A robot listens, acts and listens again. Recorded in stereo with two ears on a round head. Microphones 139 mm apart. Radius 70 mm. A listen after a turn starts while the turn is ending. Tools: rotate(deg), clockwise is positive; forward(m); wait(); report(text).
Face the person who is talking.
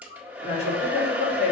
rotate(-45)
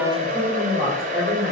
report("Found it: a woman speaking, straight ahead.")